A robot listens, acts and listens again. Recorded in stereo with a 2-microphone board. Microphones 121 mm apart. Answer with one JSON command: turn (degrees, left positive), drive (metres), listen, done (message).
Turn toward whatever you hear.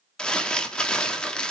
{"turn": 30}
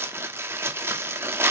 {"turn": -20}
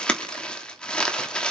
{"turn": 10}
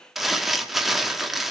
{"done": "Found it: crumpling, straight ahead, 1 to 2 m away."}